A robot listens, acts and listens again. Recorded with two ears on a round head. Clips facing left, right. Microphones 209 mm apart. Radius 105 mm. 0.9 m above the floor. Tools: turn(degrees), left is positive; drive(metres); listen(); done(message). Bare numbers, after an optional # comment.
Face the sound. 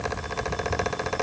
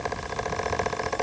listen()
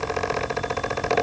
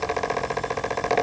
listen()
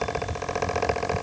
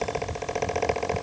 done("I can't make out anything.")